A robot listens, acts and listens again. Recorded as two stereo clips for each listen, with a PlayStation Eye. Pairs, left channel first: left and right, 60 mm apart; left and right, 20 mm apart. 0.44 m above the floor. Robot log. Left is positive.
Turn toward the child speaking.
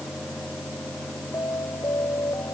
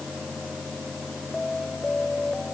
cmd idle
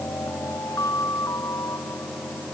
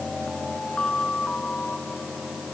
cmd idle
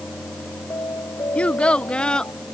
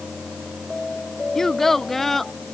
cmd yaw +30
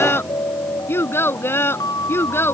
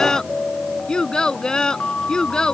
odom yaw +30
note: So it is at 140° left.
cmd yaw +140
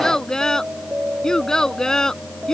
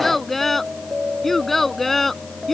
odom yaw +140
note: The child speaking is now 10° left.
cmd yaw +10
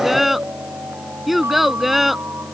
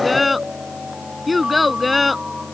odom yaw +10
end: Facing the child speaking.